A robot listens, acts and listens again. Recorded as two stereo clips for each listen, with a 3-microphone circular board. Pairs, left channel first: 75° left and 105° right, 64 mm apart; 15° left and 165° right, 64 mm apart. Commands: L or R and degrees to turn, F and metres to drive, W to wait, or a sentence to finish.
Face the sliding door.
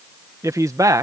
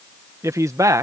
W
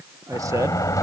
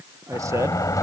L45
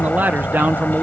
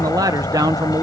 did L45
L10
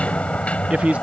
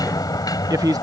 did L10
Facing the sliding door.